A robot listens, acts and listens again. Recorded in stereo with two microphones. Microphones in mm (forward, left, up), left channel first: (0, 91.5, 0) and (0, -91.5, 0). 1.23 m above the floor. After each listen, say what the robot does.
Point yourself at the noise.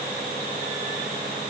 Keep listening.
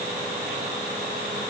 Keep listening.
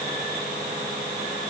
I can't make out anything.